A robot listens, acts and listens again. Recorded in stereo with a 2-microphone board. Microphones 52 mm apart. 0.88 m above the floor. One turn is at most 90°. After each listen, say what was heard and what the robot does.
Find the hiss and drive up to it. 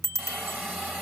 The hiss: about 30° right or 150° right. Turn 30° right.
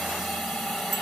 Drive 1.0 m forward.
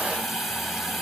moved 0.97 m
Drive 1.0 m forward.
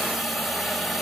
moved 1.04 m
Drive 1.0 m forward.
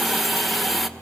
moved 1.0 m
Drive 1.0 m forward.
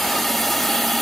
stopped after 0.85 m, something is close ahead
Arrived at the hiss, straight ahead.